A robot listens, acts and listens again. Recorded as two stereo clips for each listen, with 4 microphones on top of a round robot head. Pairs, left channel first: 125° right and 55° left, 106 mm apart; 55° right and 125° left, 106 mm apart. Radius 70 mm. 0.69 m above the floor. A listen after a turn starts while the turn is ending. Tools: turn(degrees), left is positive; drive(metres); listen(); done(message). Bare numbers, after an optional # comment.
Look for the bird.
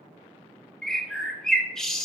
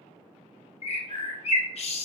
# The bird: 45° right.
turn(-45)
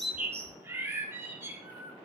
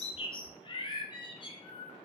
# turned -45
# The bird is now 10° right.
turn(-10)
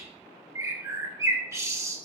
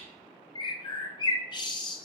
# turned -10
# The bird is now 10° right.
turn(-10)
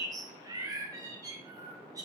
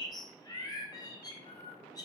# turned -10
done("Facing the bird, 1 to 2 m away.")